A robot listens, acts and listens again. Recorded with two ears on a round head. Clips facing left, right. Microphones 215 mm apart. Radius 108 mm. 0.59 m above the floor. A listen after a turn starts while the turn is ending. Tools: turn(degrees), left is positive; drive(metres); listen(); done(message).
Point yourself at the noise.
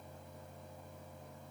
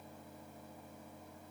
listen()
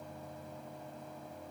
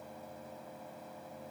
listen()
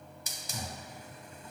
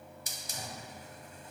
turn(degrees=65)
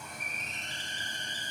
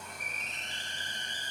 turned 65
turn(degrees=40)
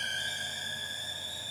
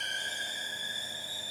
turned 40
turn(degrees=-10)
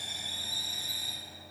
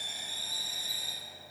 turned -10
done("Facing the hiss, under 1 m away.")